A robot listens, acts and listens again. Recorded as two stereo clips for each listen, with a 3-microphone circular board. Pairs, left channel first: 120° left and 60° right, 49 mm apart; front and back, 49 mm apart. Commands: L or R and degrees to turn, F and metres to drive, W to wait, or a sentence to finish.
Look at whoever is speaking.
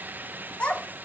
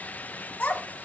L55
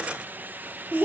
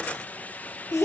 R10
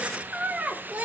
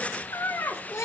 Found it: a child speaking, straight ahead.